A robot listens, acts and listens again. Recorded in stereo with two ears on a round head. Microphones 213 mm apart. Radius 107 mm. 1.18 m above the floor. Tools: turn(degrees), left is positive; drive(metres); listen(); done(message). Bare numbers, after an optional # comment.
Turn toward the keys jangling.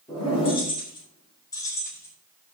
turn(30)
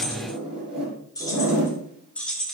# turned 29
turn(30)
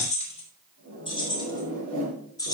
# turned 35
# The keys jangling: about 15° left or 165° left.
turn(15)
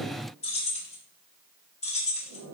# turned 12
# The keys jangling: about 30° left or 150° left.
turn(30)
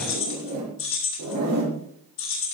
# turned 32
# So it is at 120° left.
turn(120)
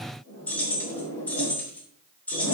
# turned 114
done("Found it: keys jangling, straight ahead.")